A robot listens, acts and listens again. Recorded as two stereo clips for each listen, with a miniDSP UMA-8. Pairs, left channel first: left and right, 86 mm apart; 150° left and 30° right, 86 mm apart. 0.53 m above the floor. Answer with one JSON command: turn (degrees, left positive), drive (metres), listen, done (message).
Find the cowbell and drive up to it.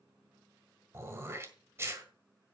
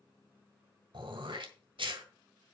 {"listen": true}
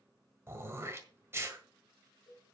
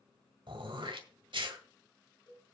{"turn": 120}
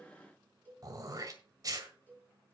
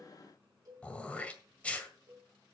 {"turn": 20}
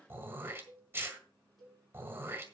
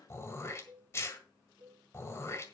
{"drive": 1.0}
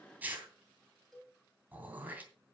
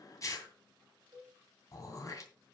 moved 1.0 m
{"drive": 1.0}
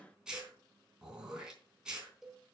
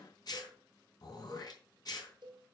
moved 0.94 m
{"drive": 1.0}
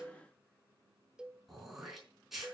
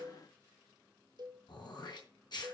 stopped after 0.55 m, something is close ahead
{"turn": -10}
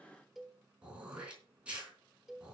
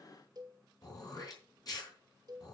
{"done": "Arrived at the cowbell, straight ahead."}